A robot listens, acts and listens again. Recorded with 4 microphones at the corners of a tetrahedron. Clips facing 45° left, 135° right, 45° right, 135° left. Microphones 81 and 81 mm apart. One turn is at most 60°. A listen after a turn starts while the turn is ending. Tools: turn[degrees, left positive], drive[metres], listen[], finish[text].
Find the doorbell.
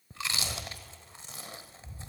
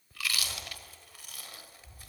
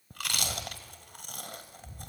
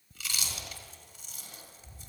Action: listen[]
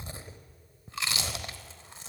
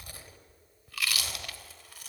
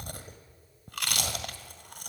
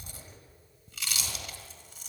Action: listen[]
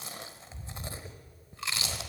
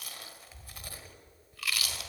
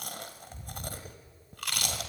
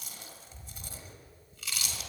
Action: finish[I can't make out a doorbell, only chewing.]